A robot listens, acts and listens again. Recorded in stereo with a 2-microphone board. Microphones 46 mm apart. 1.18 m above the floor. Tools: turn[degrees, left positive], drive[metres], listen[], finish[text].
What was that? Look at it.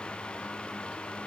Action: listen[]
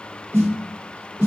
Thought: The snare drum: about 60° right or 120° right.
Action: turn[-60]
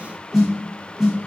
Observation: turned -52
Action: finish[Facing the snare drum.]